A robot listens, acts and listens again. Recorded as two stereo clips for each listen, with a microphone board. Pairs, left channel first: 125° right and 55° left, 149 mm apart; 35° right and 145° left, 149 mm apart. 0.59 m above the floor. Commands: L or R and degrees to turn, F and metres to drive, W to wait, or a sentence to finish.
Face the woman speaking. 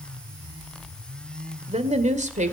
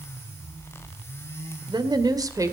L80
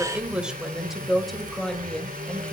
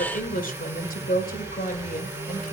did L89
R40
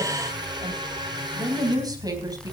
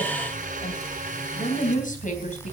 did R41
R10
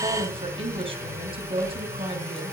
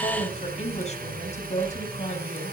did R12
Facing the woman speaking, 2 to 4 m away.